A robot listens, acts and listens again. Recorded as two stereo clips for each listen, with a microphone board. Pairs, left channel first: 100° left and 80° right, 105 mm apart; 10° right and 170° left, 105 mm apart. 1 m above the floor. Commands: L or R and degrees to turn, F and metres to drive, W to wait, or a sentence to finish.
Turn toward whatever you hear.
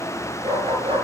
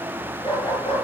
R50
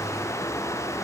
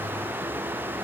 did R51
W
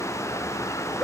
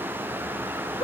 L10
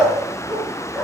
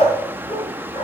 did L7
Found it: a dog barking, straight ahead, over 4 m away.